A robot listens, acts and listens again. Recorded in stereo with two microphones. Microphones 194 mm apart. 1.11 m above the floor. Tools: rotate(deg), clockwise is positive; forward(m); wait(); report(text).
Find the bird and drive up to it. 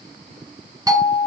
wait()
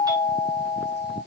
wait()
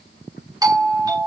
report("I can't make out a bird, only a doorbell.")